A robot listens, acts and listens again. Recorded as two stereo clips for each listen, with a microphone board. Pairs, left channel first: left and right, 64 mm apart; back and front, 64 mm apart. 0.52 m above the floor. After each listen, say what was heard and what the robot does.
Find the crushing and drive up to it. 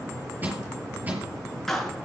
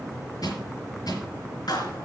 The crushing: 155° right. Turn 155° right.
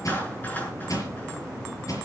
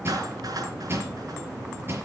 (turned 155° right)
The crushing is now 55° left. Turn 55° left.
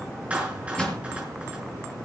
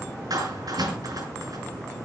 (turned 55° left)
Keep listening.
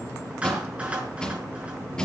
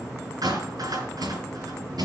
The crushing is now 10° left. Turn 10° left.
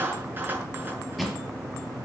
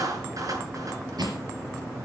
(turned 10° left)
Drive 1.0 m forward.
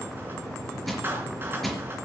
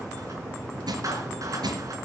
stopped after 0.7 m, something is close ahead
Blocked. The crushing is further on, straight ahead.